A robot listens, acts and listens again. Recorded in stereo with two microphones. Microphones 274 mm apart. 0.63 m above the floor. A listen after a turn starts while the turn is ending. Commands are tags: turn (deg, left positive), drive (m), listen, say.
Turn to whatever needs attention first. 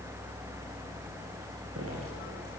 <listen/>
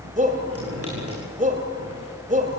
<turn deg="-30"/>
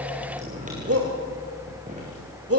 <turn deg="-120"/>
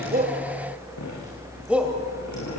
<say>Found it: a shout, straight ahead.</say>